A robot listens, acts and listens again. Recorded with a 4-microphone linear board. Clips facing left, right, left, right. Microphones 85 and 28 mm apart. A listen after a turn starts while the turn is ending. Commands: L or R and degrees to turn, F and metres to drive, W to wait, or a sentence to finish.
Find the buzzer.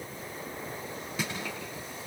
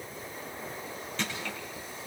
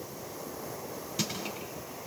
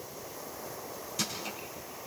W
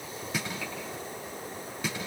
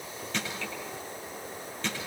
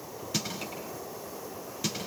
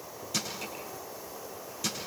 W
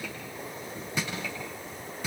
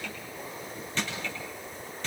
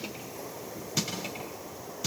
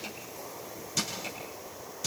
I can't make out a buzzer to turn to.